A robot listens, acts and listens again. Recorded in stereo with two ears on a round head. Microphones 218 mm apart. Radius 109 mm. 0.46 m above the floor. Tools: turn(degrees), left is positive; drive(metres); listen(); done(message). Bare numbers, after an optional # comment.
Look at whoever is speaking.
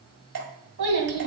# The child speaking: about 60° right or 120° right.
turn(-60)
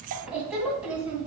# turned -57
done("Found it: a child speaking, straight ahead.")